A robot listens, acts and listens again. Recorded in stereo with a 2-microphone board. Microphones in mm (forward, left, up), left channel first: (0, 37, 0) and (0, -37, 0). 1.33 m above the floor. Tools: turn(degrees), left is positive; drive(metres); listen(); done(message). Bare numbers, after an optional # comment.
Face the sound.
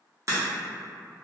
# The crack: about 40° right or 140° right.
turn(-40)
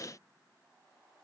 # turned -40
listen()
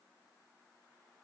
done("I heard a crack, but can't make it out now. It was about straight ahead or 100° right.")